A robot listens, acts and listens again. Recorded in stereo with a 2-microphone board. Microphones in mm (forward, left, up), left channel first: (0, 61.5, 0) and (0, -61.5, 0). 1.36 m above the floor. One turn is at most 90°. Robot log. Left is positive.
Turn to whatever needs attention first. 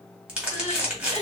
cmd yaw +90
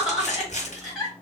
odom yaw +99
end: Found it: crying, straight ahead.